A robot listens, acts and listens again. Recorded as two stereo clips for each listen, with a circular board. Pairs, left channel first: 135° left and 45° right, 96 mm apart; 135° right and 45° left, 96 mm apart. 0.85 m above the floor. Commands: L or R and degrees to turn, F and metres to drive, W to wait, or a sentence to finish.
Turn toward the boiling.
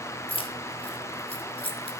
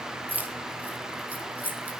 W
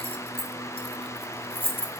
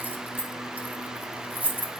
W
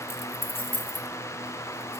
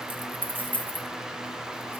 I can't make out boiling, only keys jangling.